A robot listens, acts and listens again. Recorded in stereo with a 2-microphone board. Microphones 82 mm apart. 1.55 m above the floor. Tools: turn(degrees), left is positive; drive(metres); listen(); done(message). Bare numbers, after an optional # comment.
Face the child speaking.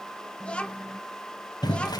turn(30)
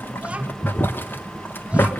listen()
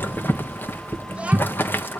# So it is at 15° right.
turn(-15)
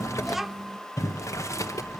done("Found it: a child speaking, straight ahead.")